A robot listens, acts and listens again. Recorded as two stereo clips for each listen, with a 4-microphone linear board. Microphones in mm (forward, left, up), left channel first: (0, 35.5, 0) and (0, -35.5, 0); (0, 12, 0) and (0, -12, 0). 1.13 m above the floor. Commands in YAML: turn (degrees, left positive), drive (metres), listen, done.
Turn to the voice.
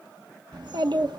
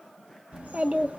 turn: -90
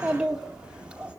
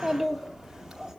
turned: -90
turn: -15
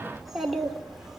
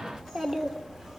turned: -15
done: "Facing the child speaking."